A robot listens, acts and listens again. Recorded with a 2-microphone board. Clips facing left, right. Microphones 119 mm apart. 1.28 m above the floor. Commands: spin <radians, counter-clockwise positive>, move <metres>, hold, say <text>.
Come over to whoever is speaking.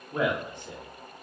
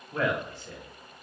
spin 0.35
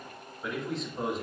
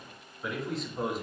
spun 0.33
move 1.0
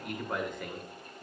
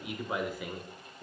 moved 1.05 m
move 1.0
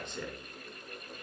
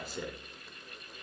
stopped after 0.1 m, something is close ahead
say Arrived at the man speaking, straight ahead.